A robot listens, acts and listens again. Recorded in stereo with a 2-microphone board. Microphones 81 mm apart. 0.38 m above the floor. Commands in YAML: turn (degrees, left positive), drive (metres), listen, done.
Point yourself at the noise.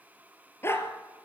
turn: 30
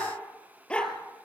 turn: 15
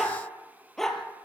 done: "Facing the dog barking."